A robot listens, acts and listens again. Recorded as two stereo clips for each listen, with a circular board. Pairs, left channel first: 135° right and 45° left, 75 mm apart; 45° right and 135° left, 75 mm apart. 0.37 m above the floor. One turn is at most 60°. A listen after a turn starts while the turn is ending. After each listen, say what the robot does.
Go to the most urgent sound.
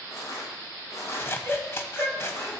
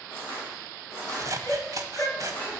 Turn 60° right.
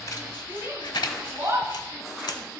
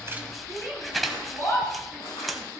Drive 1.0 m forward.
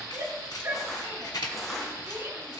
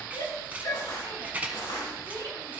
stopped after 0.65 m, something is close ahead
Blocked. The shout is further on, straight ahead.